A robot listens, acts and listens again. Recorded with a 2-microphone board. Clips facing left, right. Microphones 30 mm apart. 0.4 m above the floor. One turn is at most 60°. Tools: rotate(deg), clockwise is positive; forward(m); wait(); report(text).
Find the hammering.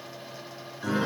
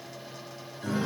wait()
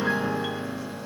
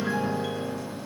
wait()
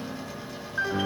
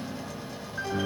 report("I can't make out hammering to turn to.")